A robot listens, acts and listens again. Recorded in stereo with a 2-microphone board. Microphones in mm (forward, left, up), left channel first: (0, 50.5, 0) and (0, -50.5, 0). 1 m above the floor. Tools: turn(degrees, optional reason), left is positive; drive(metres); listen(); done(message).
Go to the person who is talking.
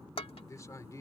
turn(degrees=35, reason="The man speaking: about 35° left or 145° left.")
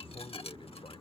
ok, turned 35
listen()
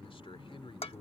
turn(degrees=115, reason="So it is at 115° left.")
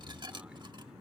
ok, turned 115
listen()
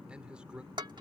turn(degrees=-10, reason="The man speaking is now 10° right.")
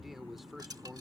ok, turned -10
drive(metres=1.0)
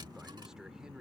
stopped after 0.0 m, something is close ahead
done("Blocked. The man speaking is further on, straight ahead.")